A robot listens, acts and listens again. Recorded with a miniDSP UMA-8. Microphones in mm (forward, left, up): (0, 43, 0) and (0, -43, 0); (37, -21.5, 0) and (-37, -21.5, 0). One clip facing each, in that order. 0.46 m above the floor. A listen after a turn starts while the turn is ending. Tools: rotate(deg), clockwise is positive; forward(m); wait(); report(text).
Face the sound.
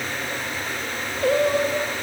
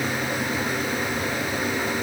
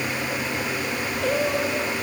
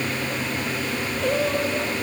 rotate(-90)
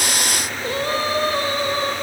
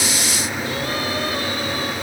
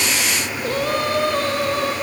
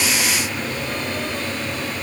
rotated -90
rotate(-30)
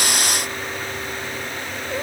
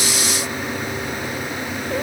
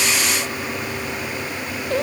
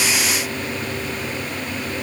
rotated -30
report("Facing the singing.")